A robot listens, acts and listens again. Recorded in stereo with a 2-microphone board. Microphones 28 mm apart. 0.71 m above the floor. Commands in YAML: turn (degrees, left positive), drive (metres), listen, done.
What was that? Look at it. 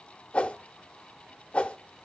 turn: 50
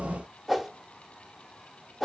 done: "Found it: a whoosh, straight ahead."